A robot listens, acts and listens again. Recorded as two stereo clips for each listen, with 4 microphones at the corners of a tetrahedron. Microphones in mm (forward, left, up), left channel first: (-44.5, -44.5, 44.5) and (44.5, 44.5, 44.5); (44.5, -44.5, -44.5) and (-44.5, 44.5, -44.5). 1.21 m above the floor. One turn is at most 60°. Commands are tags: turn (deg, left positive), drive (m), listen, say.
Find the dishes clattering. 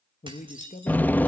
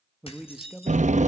<say>Facing the dishes clattering, over 4 m away.</say>